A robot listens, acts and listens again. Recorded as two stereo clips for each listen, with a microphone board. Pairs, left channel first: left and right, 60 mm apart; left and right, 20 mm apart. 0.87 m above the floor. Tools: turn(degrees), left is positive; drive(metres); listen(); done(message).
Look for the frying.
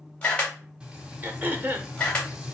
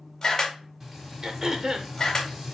turn(degrees=-30)
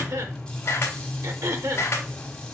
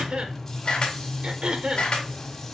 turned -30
turn(degrees=15)
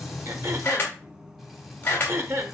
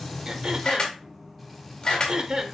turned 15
done("Facing the frying.")